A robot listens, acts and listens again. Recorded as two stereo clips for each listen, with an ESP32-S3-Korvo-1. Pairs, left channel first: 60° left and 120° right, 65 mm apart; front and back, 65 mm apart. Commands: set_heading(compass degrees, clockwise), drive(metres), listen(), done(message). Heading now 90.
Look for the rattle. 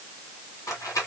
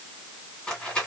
set_heading(15)
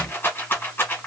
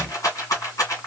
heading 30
set_heading(15)
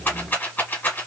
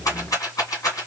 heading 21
done("Facing the rattle.")